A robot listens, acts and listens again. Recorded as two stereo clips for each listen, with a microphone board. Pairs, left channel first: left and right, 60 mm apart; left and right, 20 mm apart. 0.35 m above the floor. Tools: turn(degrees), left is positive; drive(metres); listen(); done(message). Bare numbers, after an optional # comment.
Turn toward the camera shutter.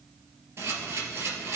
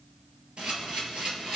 # The camera shutter: about 50° right or 130° right.
turn(-50)
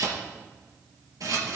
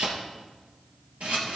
# So it is at 80° right.
turn(-80)
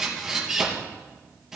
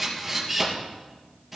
done("Found it: a camera shutter, straight ahead.")